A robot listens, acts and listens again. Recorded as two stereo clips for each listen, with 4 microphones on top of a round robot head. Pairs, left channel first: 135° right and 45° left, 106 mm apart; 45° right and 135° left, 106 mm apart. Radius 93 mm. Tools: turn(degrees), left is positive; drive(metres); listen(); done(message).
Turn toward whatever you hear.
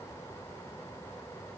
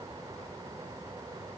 listen()
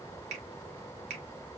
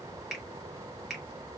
turn(degrees=45)
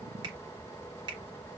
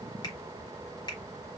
done("Found it: a finger snap, straight ahead.")